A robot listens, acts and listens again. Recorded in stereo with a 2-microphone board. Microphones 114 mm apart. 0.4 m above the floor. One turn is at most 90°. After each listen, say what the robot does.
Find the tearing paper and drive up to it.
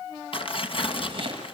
Turn 50° left.
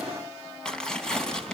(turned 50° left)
Drive 1.0 m forward.
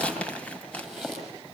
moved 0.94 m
Turn 10° left.
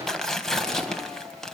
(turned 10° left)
Drive 1.0 m forward.
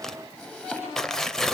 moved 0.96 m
Drive 1.0 m forward.
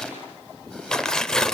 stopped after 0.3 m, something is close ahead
Turn 10° left.
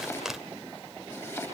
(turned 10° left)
I am next to the tearing paper.